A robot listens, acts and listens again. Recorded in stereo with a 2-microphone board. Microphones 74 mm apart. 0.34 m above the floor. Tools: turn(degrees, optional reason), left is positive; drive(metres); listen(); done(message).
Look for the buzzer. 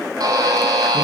turn(degrees=-60, reason="The buzzer: about 60° right or 120° right.")
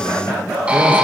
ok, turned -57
turn(degrees=-15, reason="So it is at 15° right.")
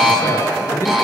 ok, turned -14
done("Found it: a buzzer, straight ahead.")